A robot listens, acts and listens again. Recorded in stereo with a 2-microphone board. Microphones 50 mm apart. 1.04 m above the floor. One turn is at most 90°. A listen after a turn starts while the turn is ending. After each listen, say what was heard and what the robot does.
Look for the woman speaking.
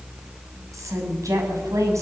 Turn 90° right.
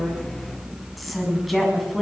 Found it: a woman speaking, straight ahead, over 4 m away.